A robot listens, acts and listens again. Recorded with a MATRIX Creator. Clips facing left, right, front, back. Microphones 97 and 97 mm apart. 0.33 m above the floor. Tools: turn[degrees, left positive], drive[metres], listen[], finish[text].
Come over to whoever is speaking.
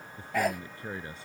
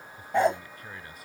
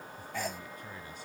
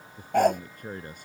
Thought: The man speaking: 150° left.
Action: turn[150]
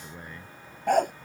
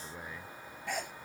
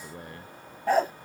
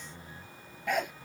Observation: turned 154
Action: drive[1.0]
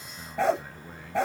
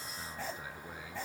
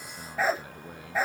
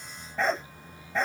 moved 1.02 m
Action: drive[1.0]
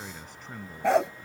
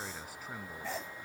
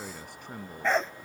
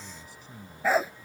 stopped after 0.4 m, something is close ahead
Action: finish[Something is in my way. I am facing the man speaking but have not reached it.]